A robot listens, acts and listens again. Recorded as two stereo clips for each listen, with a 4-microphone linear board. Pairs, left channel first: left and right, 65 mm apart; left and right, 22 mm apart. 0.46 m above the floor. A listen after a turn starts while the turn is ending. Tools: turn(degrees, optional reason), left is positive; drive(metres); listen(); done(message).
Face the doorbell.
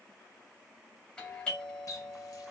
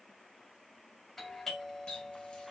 turn(degrees=15, reason="The doorbell: about 15° left or 165° left.")
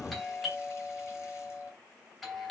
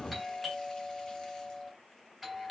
done("Found it: a doorbell, straight ahead.")